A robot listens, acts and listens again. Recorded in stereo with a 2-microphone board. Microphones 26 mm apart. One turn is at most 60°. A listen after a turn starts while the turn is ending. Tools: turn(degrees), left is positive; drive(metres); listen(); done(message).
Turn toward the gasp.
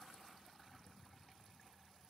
listen()
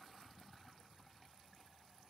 listen()
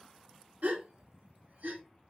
turn(degrees=-60)
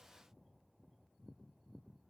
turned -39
listen()
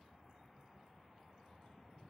done("I heard a gasp, but can't make it out now. It was about 35° right or 65° right.")